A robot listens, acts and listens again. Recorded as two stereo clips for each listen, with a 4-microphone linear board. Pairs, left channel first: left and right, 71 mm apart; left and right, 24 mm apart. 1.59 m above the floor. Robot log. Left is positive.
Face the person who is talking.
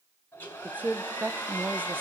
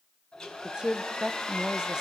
note: The woman speaking: about 30° right or 150° right.
cmd yaw -30
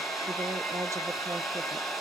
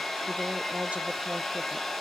cmd idle
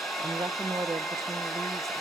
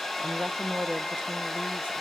note: So it is at 120° right.
cmd yaw -120
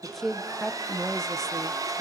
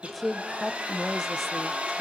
end: Found it: a woman speaking, straight ahead.